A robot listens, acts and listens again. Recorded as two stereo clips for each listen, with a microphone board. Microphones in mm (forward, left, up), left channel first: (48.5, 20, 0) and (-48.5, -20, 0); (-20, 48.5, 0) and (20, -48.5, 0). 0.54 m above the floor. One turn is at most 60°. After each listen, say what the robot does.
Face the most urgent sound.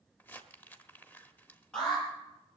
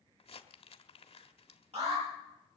Turn 60° right.
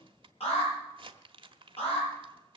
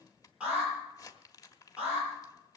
Turn 10° left.
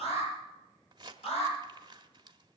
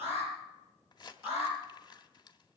Facing the alarm.